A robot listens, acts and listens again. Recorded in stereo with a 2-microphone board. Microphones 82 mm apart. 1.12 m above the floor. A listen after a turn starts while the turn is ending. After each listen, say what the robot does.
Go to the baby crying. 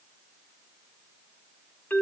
Keep listening.
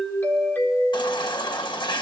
Turn 90° left.
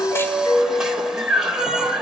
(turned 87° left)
Turn 10° right.
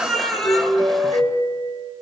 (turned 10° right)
Drive 1.0 m forward.
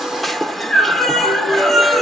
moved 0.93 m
Drive 1.0 m forward.
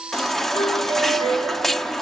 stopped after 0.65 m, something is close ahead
Arrived at the baby crying, straight ahead.